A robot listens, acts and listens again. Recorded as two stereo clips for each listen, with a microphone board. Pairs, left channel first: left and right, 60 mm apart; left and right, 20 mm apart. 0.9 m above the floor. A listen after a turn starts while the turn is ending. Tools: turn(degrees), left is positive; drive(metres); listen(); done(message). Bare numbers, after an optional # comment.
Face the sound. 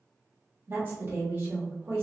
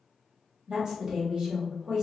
# The woman speaking: about 40° right or 140° right.
turn(-40)
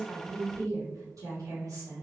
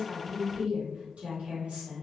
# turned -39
# So it is at 95° right.
turn(-95)
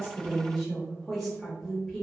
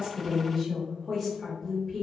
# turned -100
done("Found it: a woman speaking, straight ahead.")